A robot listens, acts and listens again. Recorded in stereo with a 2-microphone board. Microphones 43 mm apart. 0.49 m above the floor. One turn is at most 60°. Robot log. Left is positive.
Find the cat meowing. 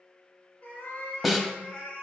note: The cat meowing: about 20° left or 160° left.
cmd yaw +20
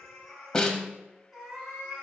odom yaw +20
note: So it is at 15° right.
cmd yaw -15
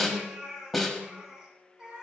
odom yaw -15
note: The cat meowing is now 20° right.
cmd yaw -20
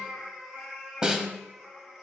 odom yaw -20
end: Facing the cat meowing, 1 to 2 m away.